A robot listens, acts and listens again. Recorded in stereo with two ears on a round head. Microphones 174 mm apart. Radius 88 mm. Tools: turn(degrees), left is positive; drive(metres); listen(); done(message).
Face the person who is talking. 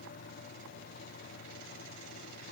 listen()
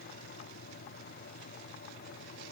listen()
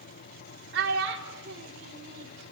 turn(degrees=-65)
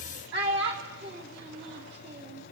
turn(degrees=-55)
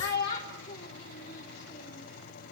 turn(degrees=20)
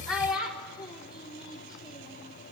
done("Found it: a child speaking, straight ahead.")